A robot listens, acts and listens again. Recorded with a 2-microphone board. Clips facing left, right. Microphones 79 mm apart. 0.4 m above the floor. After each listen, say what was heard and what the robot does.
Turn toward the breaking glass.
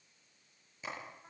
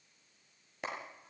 Keep listening.
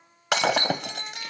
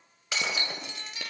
The breaking glass: about 65° left or 115° left. Turn 65° left.
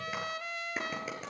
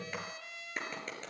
Keep listening.
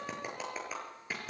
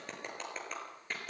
I heard breaking glass, but can't make it out now. It was about straight ahead or 50° left.